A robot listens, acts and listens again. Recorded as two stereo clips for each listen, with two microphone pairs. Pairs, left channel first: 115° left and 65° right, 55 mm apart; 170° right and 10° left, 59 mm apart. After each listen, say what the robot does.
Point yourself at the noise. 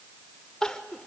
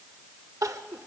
Turn 30° left.
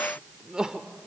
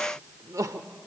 Found it: crying, straight ahead, under 1 m away.